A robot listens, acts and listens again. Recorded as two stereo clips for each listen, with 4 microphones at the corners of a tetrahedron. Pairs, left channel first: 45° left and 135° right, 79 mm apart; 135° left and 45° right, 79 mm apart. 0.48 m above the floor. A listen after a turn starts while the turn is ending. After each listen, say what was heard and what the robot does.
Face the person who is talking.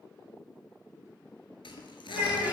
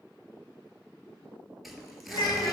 The child speaking: 155° left. Turn 155° left.
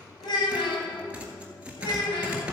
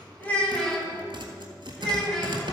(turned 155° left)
The child speaking is now 55° left. Turn 55° left.
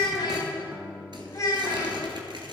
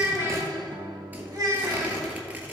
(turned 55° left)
Facing the child speaking.